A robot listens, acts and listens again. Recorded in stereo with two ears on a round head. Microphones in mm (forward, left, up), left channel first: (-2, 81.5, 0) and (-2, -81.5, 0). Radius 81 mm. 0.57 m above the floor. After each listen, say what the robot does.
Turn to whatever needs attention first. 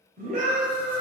Turn 45° right.
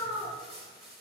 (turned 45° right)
Turn 80° right.
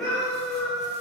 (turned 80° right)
Facing the scream, 2 to 4 m away.